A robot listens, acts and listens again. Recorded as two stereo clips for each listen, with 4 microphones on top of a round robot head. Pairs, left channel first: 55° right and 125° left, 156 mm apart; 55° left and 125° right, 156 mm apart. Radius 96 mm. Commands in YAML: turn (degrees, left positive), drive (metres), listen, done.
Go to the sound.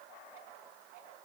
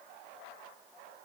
listen: true
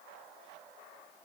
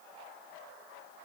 listen: true
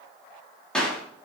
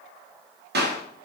turn: -135
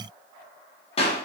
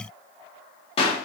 drive: 1.0
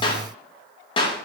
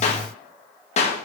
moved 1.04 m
drive: 1.0
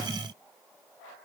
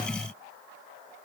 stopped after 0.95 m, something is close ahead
listen: true
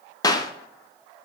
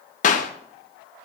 turn: 15
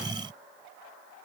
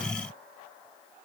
listen: true
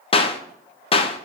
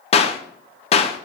done: "Arrived at the clap, straight ahead."